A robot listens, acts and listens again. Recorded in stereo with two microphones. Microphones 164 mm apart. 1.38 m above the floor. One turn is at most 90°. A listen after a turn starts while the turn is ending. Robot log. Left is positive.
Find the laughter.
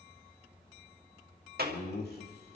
cmd yaw +90
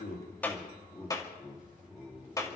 note: So it is at 15° left.
cmd yaw +15
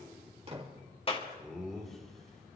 end: Found it: laughter, straight ahead.